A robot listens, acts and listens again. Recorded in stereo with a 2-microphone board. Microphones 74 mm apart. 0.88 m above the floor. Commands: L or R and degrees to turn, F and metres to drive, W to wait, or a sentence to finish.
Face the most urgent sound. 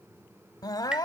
L60
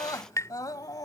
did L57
L55
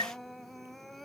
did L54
Found it: crying, straight ahead.